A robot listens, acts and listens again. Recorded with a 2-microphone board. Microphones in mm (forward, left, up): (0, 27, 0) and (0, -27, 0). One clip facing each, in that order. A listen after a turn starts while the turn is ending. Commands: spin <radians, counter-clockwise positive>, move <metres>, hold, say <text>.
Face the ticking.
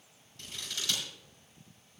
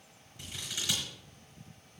hold
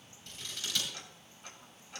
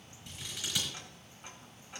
spin -0.44
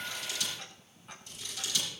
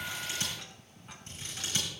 hold
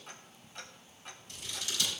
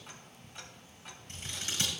say Found it: ticking, straight ahead.